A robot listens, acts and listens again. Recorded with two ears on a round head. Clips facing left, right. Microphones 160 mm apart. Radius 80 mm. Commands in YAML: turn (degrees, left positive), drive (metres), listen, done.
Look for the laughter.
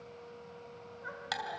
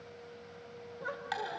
turn: -65
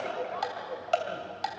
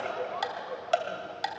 done: "Found it: laughter, straight ahead."